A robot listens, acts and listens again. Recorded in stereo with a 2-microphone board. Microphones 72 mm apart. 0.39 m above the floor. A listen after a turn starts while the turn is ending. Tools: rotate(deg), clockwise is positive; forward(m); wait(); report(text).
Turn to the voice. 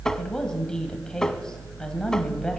rotate(-30)
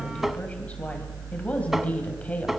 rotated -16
rotate(-160)
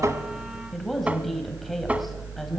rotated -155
report("Found it: a woman speaking, straight ahead.")